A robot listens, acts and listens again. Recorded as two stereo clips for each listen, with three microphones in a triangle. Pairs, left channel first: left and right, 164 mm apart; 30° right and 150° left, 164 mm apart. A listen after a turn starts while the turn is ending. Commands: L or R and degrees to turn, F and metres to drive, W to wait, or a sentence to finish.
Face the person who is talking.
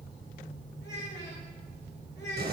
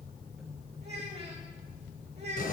L100
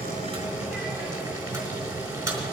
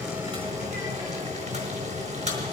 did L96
W
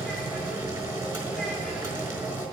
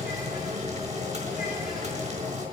W
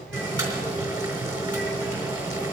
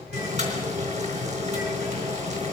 I heard a child speaking from this way, but can't make it out now.